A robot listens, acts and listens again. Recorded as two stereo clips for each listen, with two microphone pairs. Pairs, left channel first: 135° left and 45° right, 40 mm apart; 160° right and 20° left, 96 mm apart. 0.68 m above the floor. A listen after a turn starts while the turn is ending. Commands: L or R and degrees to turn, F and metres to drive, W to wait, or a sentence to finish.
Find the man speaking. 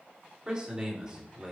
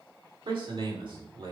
L20
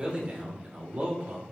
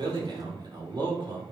Found it: a man speaking, straight ahead.